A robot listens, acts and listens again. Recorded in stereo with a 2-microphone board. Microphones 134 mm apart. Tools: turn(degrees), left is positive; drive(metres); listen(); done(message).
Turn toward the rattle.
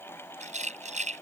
turn(degrees=-55)
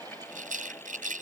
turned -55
turn(degrees=-70)
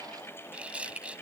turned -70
turn(degrees=-10)
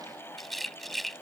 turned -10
done("Found it: a rattle, straight ahead.")